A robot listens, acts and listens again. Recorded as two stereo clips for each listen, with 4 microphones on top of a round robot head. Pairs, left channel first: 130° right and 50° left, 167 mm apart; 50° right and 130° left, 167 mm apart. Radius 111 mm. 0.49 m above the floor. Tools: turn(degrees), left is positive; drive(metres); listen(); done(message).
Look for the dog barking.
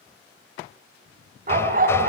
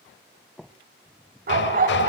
turn(degrees=85)
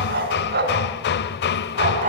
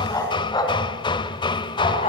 done("Found it: a dog barking, straight ahead, 2 to 4 m away.")